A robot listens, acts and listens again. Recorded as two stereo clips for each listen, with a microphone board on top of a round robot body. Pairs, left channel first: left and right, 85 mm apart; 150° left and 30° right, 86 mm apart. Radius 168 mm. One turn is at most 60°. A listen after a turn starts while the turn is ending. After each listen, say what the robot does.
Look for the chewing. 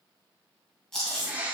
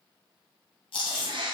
Turn 60° left.
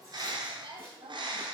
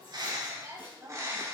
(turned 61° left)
Turn 60° left.
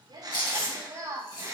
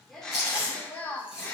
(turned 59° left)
Turn 50° left.
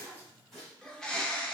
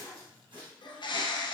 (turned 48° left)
Keep listening.
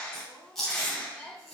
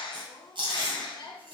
Facing the chewing, 2 to 4 m away.